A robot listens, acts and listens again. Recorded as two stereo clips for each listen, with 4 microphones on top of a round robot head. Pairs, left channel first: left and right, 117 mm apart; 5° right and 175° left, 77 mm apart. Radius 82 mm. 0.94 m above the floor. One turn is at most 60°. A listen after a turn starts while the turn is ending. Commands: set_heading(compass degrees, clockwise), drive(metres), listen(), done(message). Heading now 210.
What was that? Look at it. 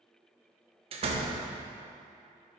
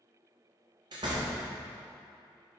set_heading(270)
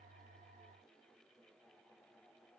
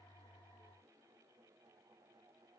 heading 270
set_heading(330)
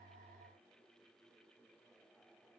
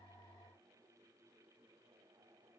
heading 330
set_heading(340)
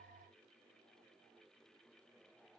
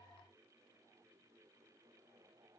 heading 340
done("I heard a door slam from this way, but can't make it out now.")